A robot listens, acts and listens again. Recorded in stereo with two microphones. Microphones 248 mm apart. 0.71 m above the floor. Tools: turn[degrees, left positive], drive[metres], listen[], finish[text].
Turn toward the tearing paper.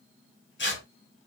Thought: The tearing paper: about 50° left or 130° left.
Action: turn[50]
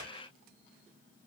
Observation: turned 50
Action: listen[]
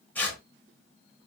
Thought: So it is at 10° left.
Action: turn[10]
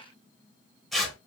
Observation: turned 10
Action: finish[Facing the tearing paper.]